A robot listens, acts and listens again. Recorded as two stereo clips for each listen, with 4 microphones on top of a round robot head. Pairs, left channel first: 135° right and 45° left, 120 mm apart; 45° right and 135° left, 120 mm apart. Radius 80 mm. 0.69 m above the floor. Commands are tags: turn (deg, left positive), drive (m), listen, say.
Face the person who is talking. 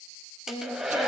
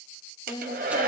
<turn deg="-95"/>
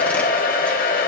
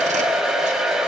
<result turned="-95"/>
<listen/>
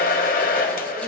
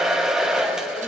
<listen/>
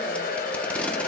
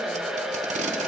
<say>I heard a woman speaking from this way, but can't make it out now.</say>